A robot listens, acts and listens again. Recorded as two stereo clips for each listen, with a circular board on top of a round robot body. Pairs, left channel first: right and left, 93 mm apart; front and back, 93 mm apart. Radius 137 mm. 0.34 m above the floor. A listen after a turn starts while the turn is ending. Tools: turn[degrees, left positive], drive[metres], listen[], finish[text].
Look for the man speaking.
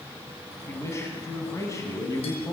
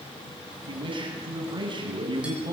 Thought: The man speaking: 145° right.
Action: turn[-145]
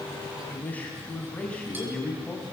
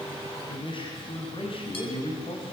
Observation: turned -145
Thought: The man speaking is now 10° right.
Action: turn[-10]
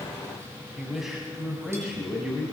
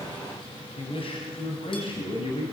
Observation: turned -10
Thought: The man speaking is now 10° left.
Action: turn[10]
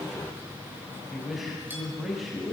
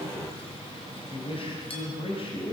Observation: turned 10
Action: finish[Facing the man speaking, 2 to 4 m away.]